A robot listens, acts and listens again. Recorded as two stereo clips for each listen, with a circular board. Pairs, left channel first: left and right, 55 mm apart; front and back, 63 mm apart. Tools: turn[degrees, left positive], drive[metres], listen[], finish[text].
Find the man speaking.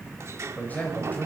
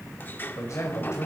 Thought: The man speaking: 35° left.
Action: turn[35]
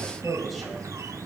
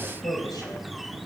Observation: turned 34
Action: finish[Facing the man speaking, 2 to 4 m away.]